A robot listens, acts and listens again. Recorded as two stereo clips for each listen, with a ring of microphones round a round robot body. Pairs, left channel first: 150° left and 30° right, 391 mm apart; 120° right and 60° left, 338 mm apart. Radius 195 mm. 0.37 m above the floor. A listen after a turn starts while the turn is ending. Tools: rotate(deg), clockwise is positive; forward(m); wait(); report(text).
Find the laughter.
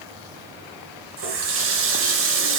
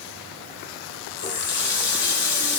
wait()
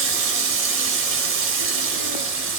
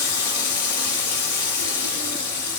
wait()
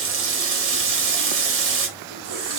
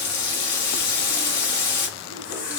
report("I can't make out laughter to turn to.")